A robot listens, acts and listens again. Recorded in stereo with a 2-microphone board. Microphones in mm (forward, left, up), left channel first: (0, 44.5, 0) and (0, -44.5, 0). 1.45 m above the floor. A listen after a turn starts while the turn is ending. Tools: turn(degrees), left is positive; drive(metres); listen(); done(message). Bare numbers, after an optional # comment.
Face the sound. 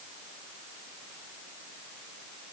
listen()
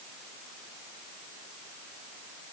listen()
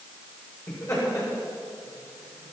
# The laughter: about 35° left or 145° left.
turn(35)
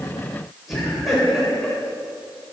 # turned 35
done("Facing the laughter, over 4 m away.")